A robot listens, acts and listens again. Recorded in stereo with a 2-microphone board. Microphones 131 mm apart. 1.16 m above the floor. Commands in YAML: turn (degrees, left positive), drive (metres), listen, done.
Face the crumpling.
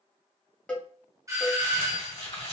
turn: 45
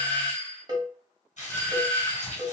turn: 85
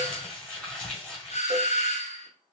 turn: 10
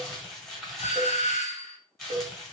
done: "Facing the crumpling, 1 to 2 m away."